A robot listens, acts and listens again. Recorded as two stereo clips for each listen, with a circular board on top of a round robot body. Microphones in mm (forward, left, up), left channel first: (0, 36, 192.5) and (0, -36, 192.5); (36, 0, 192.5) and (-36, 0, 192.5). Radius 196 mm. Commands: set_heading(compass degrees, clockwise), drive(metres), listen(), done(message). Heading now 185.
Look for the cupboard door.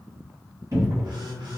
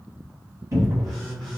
set_heading(315)
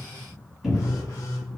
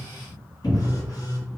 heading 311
done("Facing the cupboard door.")